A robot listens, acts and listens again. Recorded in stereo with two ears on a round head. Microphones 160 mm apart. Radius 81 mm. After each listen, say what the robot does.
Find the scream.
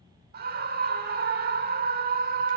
Turn 55° right.
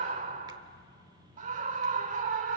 Turn 50° right.
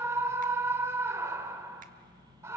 Turn 20° right.
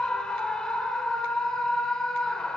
Facing the scream, 1 to 2 m away.